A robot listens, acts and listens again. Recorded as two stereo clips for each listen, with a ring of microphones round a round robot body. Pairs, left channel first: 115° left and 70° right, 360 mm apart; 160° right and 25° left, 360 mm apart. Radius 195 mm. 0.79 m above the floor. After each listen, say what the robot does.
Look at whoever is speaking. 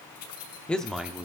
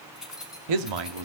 Turn 20° left.
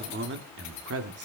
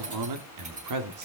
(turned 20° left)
Turn 15° right.
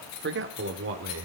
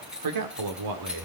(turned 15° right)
Turn 15° right.
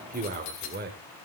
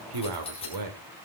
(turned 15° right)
Facing the man speaking, 2 to 4 m away.